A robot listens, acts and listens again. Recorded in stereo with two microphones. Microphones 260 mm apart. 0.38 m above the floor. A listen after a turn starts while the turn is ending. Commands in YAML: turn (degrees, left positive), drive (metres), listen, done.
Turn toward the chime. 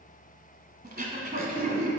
listen: true
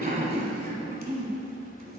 listen: true
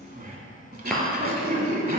turn: 30
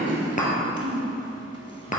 turn: 150
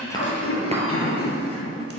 listen: true
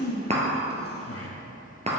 turn: -25
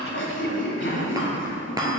turn: -15
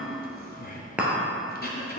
done: "Found it: a chime, straight ahead."